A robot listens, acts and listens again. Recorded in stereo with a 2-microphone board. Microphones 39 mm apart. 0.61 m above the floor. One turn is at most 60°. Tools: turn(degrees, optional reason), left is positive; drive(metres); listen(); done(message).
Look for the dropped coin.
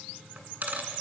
turn(degrees=-50, reason="The dropped coin: about 50° right or 130° right.")
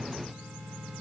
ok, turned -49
listen()
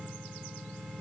done("I heard a dropped coin, but can't make it out now. It was about straight ahead or 80° right.")